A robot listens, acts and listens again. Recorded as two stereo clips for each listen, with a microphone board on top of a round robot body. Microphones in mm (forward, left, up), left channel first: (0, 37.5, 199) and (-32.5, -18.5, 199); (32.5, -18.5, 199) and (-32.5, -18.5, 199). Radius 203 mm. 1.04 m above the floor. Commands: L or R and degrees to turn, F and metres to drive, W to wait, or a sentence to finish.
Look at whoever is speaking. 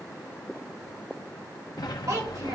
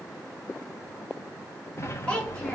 R75
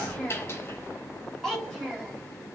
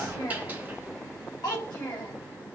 R25
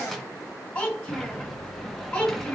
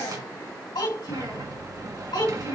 Facing the child speaking.